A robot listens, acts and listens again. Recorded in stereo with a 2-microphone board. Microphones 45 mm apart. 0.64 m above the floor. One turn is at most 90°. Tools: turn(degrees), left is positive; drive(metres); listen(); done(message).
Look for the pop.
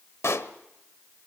turn(degrees=90)
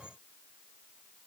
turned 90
done("I heard a pop from this way, but can't make it out now.")